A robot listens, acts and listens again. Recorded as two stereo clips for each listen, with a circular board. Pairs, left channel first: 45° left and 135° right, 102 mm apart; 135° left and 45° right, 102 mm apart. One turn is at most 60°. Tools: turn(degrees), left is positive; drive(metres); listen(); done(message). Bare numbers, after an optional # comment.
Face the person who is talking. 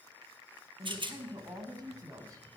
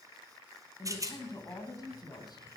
# The woman speaking: 175° left.
turn(60)
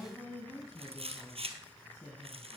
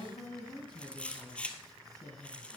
# The woman speaking is now 95° left.
turn(60)
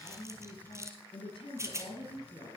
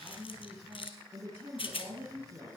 # The woman speaking is now 25° left.
turn(25)
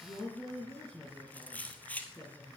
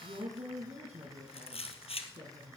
# The woman speaking is now 20° right.
turn(-20)
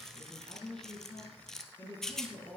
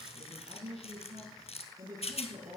# The woman speaking is now 10° right.
turn(-10)
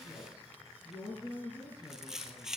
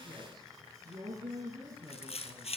done("Facing the woman speaking.")